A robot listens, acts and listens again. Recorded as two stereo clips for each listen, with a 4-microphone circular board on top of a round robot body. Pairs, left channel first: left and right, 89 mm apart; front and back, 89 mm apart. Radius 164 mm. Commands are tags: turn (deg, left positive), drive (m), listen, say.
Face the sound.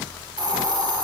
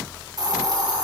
<turn deg="-135"/>
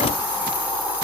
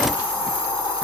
<turn deg="-15"/>
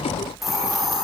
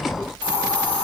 <say>Found it: a hiss, straight ahead, over 4 m away.</say>